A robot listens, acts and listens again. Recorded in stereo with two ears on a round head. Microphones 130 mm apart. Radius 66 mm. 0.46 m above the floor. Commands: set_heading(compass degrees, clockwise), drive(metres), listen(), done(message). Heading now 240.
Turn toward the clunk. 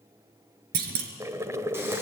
set_heading(310)
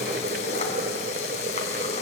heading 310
listen()
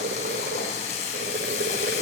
done("I heard a clunk, but can't make it out now. It was about straight ahead or 40° right.")